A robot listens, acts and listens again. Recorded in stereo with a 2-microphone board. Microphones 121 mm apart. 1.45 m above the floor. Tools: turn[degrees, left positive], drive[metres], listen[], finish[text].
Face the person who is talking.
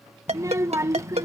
Thought: The child speaking: about 25° right or 155° right.
Action: turn[-25]
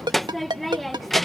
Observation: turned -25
Action: finish[Found it: a child speaking, straight ahead.]